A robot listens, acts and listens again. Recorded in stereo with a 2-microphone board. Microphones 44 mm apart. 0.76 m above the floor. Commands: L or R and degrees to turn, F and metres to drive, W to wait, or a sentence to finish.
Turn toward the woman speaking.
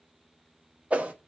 W
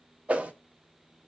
W
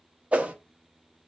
I can't make out a woman speaking, only a whoosh.